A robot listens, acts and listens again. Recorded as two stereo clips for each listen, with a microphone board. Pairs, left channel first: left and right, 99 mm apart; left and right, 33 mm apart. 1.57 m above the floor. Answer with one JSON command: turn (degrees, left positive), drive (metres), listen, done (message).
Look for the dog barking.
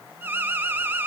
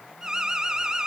{"listen": true}
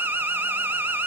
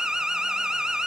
{"listen": true}
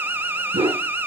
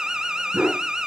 {"turn": -70}
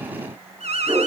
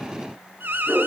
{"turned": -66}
{"turn": -20}
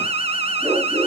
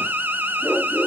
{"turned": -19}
{"done": "Found it: a dog barking, straight ahead, over 4 m away."}